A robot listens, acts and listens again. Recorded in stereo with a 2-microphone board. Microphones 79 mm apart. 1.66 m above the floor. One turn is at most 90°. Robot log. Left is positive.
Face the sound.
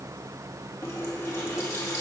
note: The running tap: about 40° left or 140° left.
cmd yaw +40
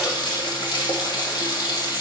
note: So it is at 95° left.
cmd yaw +90
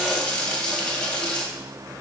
note: The running tap is now 15° left.
cmd yaw +15
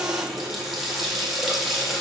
end: Facing the running tap.